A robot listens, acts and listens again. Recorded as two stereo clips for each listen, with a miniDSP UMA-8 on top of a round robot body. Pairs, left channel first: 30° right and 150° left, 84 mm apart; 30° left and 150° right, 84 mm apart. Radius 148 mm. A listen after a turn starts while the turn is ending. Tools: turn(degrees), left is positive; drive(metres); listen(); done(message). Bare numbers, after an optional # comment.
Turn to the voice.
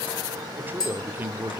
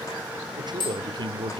# The man speaking: 145° right.
turn(-145)
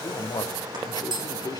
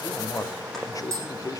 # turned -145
done("Facing the man speaking, 1 to 2 m away.")